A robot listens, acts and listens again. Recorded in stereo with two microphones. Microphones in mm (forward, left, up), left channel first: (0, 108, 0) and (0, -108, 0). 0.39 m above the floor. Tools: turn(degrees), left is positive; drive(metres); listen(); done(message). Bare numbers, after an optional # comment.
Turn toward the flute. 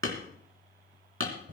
listen()
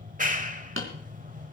listen()
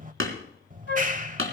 # The flute: about 55° left or 125° left.
turn(55)
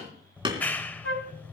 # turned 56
# So it is at 70° left.
turn(70)
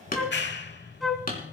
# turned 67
done("Found it: a flute, straight ahead.")